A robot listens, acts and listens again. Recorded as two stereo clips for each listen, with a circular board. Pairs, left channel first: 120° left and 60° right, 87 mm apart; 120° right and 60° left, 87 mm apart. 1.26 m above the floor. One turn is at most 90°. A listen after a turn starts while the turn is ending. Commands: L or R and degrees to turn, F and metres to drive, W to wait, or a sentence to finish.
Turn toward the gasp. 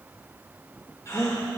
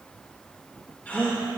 L90
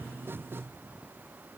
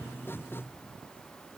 L80
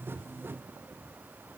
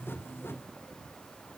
Facing where the gasp came from. I can't hear it now.